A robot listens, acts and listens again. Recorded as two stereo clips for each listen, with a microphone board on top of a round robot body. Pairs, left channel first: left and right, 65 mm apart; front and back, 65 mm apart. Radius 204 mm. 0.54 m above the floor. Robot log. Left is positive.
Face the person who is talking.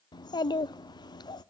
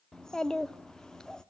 note: The child speaking: 80° left.
cmd yaw +80
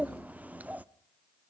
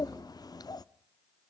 note: The child speaking is now 20° right.
cmd yaw -20
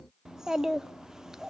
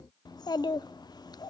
end: Facing the child speaking, under 1 m away.